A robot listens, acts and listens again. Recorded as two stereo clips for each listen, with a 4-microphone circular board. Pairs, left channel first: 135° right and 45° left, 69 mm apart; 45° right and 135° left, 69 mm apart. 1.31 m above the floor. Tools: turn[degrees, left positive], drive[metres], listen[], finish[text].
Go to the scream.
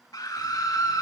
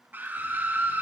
Thought: The scream: 160° right.
Action: turn[-160]
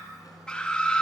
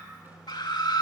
Thought: The scream is now 60° right.
Action: turn[-60]
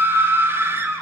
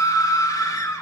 Thought: The scream is now 10° right.
Action: turn[-10]
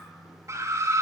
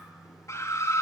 Action: drive[1.0]
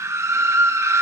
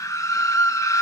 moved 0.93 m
Action: drive[1.0]
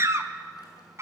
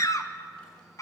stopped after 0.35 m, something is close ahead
Action: finish[Arrived at the scream, straight ahead.]